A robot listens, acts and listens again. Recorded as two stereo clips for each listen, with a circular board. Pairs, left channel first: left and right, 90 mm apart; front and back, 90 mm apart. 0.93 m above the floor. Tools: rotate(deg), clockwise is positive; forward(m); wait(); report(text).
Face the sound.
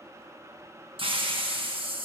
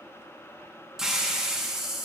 rotate(95)
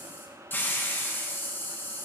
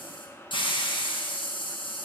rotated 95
rotate(-25)
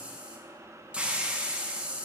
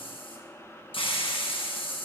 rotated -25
rotate(10)
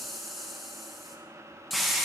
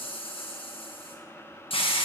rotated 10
report("Found it: a hiss, straight ahead, under 1 m away.")